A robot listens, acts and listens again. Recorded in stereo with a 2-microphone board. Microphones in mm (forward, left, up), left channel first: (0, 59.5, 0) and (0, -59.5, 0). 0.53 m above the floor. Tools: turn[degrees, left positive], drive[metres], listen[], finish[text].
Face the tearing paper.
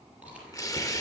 Thought: The tearing paper: about 30° left or 150° left.
Action: turn[30]
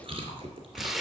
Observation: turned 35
Action: finish[Found it: tearing paper, straight ahead, 1 to 2 m away.]